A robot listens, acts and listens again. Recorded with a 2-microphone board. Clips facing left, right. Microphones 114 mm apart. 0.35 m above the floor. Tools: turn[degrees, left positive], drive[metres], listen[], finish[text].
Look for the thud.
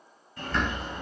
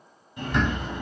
Action: listen[]
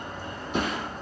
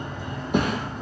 Thought: The thud: about 60° right or 120° right.
Action: turn[-60]
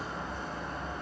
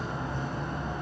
Action: listen[]
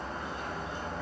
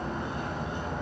Action: finish[I heard a thud, but can't make it out now. It was about straight ahead or 60° right.]